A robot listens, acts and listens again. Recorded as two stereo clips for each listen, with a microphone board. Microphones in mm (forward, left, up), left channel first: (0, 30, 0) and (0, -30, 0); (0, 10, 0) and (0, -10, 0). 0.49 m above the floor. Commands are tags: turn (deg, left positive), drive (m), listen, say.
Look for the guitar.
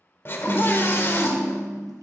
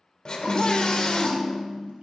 <turn deg="-90"/>
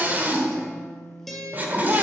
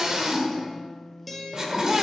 <say>Found it: a guitar, straight ahead, 1 to 2 m away.</say>